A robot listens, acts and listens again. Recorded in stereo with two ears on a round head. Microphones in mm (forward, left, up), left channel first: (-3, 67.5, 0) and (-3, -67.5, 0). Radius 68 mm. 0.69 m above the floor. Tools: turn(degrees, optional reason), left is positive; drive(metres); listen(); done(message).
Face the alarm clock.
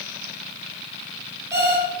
turn(degrees=-20, reason="The alarm clock: about 20° right or 160° right.")
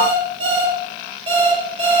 turn(degrees=-140, reason="So it is at 140° right.")
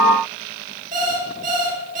turn(degrees=-55, reason="The alarm clock is now 55° right.")
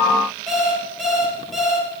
done("Facing the alarm clock, over 4 m away.")